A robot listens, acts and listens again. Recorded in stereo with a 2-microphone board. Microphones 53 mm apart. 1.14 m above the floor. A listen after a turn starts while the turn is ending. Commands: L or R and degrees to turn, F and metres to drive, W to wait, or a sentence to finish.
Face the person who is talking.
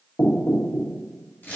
W
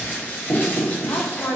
L75
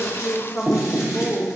L35
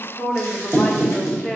L15
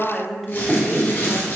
Found it: a woman speaking, straight ahead, under 1 m away.